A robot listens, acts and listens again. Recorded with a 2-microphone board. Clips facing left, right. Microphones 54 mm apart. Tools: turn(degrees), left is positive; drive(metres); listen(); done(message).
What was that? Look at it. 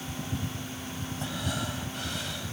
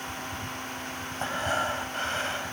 turn(degrees=-40)
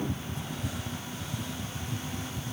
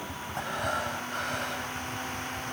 listen()
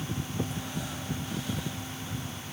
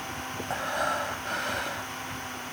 turn(degrees=-95)
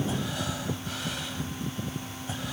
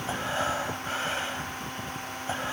turn(degrees=-35)
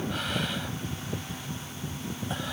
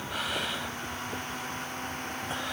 listen()
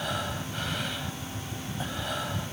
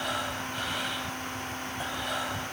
done("Facing the breathing.")